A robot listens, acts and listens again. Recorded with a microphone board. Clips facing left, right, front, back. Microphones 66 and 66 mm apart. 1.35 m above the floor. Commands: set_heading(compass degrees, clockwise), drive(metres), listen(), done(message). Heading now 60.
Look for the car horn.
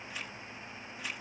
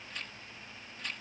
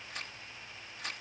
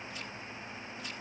listen()
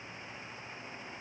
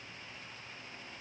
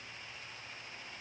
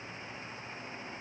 listen()
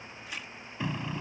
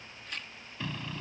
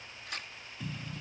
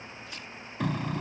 set_heading(260)
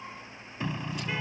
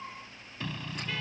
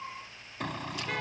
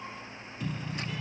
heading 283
set_heading(263)
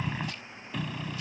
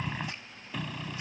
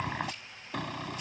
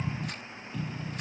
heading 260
done("Found it: a car horn, straight ahead.")